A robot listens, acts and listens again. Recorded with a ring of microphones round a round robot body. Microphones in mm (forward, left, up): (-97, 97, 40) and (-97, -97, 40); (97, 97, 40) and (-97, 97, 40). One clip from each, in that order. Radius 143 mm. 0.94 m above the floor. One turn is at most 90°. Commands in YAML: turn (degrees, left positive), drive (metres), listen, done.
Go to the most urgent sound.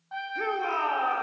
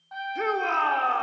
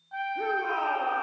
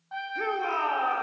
turn: -90
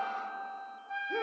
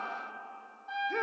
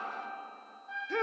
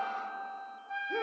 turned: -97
turn: -30
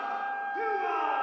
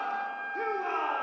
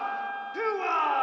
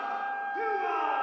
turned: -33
drive: 1.0
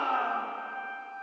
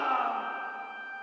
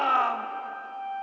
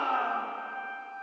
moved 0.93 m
drive: 1.0
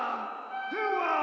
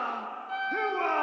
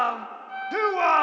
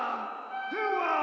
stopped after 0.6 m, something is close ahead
done: "I am next to the shout."